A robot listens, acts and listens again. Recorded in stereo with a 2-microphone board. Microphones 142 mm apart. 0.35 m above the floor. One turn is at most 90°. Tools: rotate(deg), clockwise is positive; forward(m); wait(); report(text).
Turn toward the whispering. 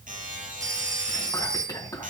rotate(-25)
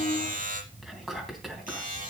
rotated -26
report("Facing the whispering.")